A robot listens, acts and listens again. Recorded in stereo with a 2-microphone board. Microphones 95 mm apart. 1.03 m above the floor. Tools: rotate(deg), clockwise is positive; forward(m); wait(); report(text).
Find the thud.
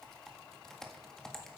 wait()
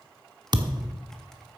rotate(45)
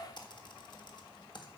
wait()
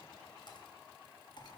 report("I heard a thud, but can't make it out now. It was about straight ahead or 90° right.")